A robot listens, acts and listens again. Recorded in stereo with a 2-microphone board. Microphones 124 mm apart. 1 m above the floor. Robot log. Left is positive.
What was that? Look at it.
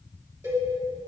note: The cowbell: about 20° right or 160° right.
cmd yaw -20
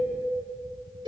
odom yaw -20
note: So it is at 135° right.
cmd yaw -135
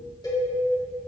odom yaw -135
note: The cowbell is now 35° left.
cmd yaw +35
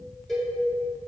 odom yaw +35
end: Found it: a cowbell, straight ahead, 2 to 4 m away.